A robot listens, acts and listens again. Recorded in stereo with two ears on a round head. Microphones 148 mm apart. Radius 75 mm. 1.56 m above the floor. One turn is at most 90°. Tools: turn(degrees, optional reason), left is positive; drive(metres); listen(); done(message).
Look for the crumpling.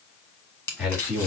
turn(degrees=30)
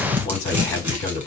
turn(degrees=-15, reason="So it is at 15° right.")
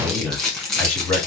done("Facing the crumpling.")